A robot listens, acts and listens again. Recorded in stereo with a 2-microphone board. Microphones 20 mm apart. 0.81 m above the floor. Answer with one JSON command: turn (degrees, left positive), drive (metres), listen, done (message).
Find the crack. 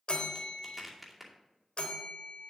{"turn": -30}
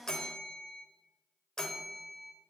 {"listen": true}
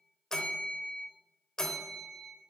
{"done": "I heard a crack, but can't make it out now. It was about 20° left or 140° right."}